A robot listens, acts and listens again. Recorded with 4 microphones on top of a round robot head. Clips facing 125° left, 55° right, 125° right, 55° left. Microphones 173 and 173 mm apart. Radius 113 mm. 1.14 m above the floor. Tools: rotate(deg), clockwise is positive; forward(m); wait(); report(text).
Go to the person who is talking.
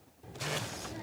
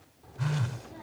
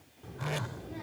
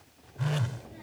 rotate(165)
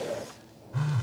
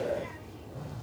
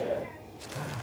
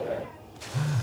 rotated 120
rotate(45)
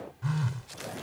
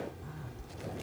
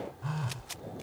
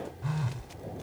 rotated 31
rotate(15)
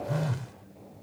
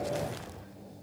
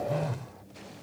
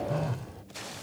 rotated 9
forward(1.0)
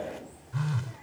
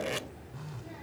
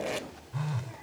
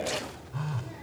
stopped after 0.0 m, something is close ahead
report("Something is in my way. I am facing the child speaking but have not reached it.")